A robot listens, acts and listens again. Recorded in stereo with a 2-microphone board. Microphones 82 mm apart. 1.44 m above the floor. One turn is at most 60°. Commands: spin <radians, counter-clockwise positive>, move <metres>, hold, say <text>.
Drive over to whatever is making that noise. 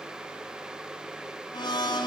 spin 1.05
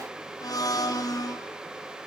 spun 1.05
spin 0.87
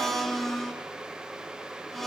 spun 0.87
move 1.0
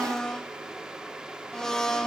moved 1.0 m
move 1.0
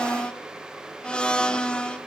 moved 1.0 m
spin 0.17
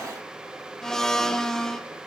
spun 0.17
move 1.0
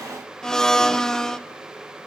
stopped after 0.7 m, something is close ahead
say Arrived at the blender, straight ahead.